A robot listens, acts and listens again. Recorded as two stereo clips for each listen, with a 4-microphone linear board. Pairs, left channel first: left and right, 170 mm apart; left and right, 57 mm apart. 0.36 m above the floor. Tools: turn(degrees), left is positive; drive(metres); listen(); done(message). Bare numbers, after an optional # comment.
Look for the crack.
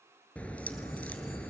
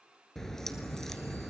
turn(30)
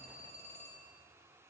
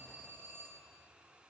listen()
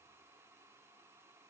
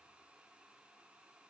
done("I heard a crack, but can't make it out now. It was about 20° right or 140° left.")